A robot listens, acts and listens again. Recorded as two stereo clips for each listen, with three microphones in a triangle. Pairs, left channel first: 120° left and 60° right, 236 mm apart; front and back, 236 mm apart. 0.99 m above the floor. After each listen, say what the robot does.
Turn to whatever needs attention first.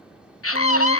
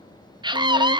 Turn 110° left.
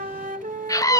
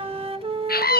Turn 45° left.
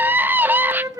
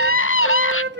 Turn 20° left.
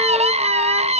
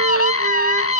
Facing the scream, 1 to 2 m away.